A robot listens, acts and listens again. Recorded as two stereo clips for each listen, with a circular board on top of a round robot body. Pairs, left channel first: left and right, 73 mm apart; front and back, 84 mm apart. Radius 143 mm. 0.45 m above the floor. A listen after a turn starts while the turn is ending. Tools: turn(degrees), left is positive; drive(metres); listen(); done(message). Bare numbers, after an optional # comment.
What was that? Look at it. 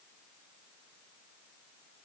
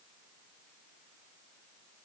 listen()
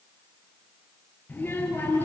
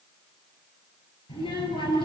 # The child speaking: 25° left.
turn(25)
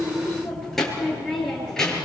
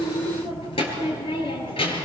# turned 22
# The child speaking is now 10° left.
turn(10)
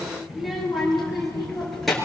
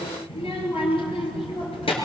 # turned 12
done("Found it: a child speaking, straight ahead.")